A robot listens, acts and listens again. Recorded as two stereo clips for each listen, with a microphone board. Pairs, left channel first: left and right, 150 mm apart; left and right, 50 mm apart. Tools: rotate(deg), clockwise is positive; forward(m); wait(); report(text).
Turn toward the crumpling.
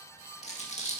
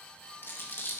rotate(-50)
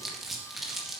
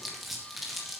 report("Facing the crumpling.")